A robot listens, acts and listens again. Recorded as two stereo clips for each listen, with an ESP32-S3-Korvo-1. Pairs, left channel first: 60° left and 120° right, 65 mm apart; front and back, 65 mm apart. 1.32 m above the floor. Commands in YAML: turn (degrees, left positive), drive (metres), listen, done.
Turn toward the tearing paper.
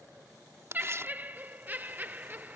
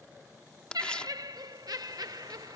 turn: -75
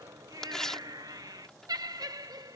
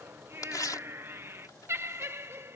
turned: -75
turn: -20
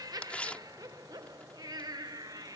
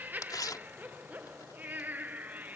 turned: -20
turn: -10
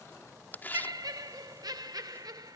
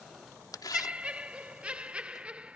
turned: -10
done: "Found it: tearing paper, straight ahead."